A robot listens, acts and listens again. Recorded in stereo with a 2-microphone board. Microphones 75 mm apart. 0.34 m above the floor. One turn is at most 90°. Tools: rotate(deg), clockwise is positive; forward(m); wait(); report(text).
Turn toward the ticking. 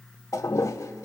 wait()
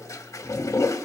wait()
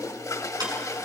rotate(60)
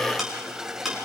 report("Found it: ticking, straight ahead.")